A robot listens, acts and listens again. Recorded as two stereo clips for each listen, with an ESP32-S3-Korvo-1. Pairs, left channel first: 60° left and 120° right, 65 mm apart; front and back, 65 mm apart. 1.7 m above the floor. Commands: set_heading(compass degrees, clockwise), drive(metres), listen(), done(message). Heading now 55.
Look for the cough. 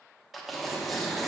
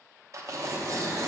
listen()
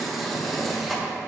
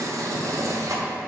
listen()
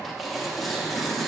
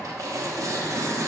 done("I can't make out a cough to turn to.")